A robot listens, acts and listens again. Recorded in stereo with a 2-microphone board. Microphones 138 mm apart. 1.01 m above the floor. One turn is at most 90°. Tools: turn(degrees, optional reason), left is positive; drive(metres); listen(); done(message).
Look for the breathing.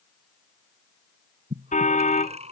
turn(degrees=-55, reason="The breathing: about 55° right or 125° right.")
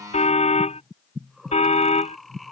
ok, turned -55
done("Found it: breathing, straight ahead.")